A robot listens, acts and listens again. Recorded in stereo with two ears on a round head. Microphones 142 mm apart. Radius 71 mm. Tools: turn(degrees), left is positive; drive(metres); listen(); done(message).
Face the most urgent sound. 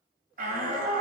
turn(degrees=-60)
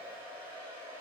listen()
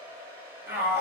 turn(degrees=-15)
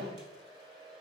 listen()
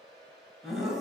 done("Found it: a shout, straight ahead, 2 to 4 m away.")